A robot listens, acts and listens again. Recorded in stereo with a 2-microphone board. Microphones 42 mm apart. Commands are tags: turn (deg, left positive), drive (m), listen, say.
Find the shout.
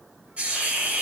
<listen/>
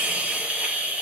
<listen/>
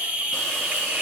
<say>I can't make out a shout to turn to.</say>